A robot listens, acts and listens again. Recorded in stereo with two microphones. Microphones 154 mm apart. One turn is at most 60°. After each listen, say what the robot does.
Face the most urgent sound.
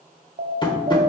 Turn 60° right.
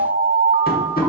Turn 30° right.
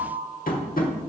Turn 10° right.
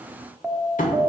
Found it: an alarm, straight ahead.